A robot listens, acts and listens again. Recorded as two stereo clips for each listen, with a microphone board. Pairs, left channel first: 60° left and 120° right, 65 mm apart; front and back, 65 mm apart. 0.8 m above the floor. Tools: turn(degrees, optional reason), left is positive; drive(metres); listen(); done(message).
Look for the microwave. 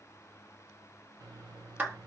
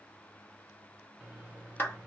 turn(degrees=-110, reason="The microwave: 110° right.")
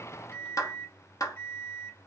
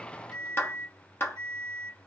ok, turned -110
done("Found it: a microwave, straight ahead.")